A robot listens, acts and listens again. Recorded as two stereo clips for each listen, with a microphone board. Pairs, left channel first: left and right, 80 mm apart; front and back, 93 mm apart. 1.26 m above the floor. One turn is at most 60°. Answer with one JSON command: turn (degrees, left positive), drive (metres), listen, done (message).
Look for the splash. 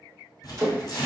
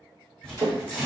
{"turn": -60}
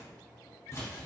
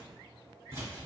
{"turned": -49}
{"turn": -60}
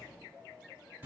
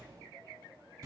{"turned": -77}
{"done": "Facing where the splash came from. I can't hear it now."}